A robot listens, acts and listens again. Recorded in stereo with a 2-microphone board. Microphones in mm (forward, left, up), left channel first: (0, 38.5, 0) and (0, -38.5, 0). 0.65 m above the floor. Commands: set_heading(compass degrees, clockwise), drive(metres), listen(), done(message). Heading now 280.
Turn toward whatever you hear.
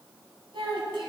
set_heading(10)
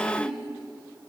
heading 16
done("Facing the child speaking.")